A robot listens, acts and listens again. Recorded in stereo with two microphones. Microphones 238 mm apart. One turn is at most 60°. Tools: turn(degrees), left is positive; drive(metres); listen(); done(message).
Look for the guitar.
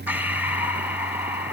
listen()
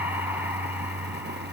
listen()
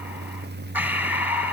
done("I can't make out a guitar, only breathing.")